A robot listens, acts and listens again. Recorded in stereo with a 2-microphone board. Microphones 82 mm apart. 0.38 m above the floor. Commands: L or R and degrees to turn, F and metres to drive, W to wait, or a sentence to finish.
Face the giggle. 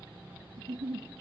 R70
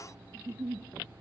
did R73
R30
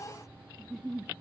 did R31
Facing the giggle, 1 to 2 m away.